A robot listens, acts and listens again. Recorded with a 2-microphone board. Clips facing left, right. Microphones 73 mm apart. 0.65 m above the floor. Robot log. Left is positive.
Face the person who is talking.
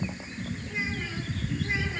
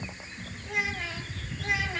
cmd yaw -90
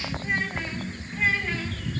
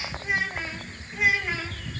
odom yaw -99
note: So it is at 15° right.
cmd yaw -15
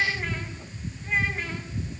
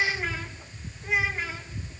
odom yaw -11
note: The child speaking is now 10° right.
cmd yaw -10
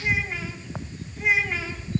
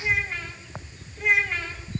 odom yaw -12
end: Facing the child speaking.